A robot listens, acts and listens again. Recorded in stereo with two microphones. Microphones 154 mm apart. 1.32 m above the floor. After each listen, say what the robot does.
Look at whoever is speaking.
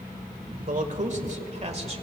Turn 40° right.
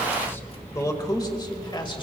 Turn 35° left.
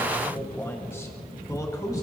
Turn 25° left.
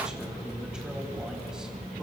Found it: a man speaking, straight ahead, 2 to 4 m away.